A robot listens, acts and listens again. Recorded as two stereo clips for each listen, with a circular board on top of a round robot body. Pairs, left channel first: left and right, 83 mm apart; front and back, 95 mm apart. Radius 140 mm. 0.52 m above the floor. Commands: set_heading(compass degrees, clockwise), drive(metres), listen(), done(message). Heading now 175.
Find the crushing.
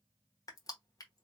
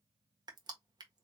set_heading(40)
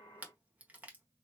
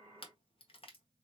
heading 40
set_heading(60)
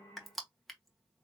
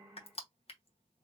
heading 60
done("Found it: crushing, straight ahead, 1 to 2 m away.")